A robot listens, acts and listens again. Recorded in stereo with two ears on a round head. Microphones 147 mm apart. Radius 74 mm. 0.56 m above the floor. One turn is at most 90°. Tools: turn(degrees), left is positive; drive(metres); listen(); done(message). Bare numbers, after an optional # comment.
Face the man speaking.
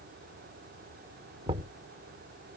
listen()
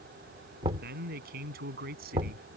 # The man speaking: about 65° right or 115° right.
turn(-65)
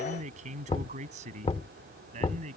# So it is at 45° right.
turn(-45)
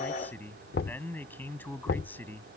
# The man speaking is now 10° left.
turn(10)
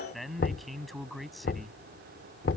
done("Found it: a man speaking, straight ahead.")